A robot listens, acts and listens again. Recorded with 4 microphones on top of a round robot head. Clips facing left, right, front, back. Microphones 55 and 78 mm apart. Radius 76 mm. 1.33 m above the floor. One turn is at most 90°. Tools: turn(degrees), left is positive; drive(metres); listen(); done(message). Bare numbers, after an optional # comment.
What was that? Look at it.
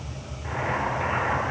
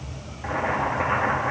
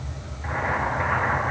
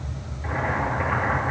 # The boiling: 85° right.
turn(-85)
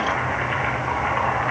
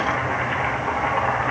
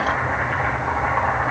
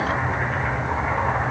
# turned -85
done("Found it: boiling, straight ahead.")